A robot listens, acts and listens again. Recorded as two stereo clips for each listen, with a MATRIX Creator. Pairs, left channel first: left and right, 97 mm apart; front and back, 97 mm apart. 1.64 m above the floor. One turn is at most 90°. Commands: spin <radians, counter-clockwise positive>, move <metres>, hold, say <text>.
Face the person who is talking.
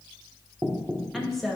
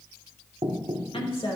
say Facing the woman speaking.